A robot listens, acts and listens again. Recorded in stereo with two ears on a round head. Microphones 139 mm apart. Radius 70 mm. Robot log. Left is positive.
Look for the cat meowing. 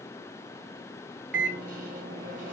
cmd idle
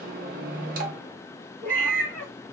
cmd yaw +30
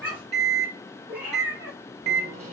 note: So it is at 10° right.
cmd yaw -10
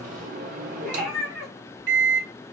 end: Facing the cat meowing, 1 to 2 m away.